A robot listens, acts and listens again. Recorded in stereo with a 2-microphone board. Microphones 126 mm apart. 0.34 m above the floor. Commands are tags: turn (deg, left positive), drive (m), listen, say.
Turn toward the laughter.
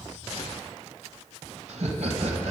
<turn deg="-65"/>
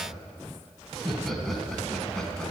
<say>Found it: laughter, straight ahead, 2 to 4 m away.</say>